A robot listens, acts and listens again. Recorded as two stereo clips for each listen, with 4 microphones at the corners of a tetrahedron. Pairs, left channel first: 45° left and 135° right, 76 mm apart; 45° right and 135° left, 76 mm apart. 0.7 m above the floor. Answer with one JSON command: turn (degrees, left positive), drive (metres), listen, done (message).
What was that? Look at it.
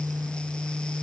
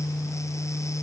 {"listen": true}
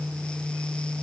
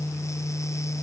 {"listen": true}
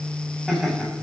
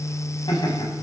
{"turn": -45}
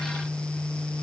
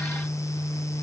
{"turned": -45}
{"listen": true}
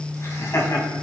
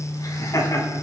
{"done": "Facing the laughter."}